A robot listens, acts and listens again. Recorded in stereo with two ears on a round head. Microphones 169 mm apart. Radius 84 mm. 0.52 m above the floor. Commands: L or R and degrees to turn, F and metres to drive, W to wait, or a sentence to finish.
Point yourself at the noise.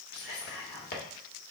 L55
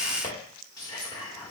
L25
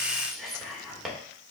Found it: whispering, straight ahead.